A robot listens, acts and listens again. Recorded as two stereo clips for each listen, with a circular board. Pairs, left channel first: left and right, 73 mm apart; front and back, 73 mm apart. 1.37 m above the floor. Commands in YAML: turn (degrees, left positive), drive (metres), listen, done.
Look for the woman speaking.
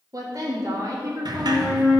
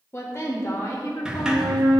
turn: -50
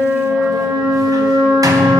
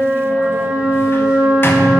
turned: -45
listen: true
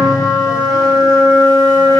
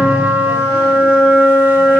listen: true
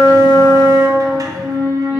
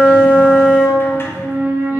done: "I heard a woman speaking from this way, but can't make it out now."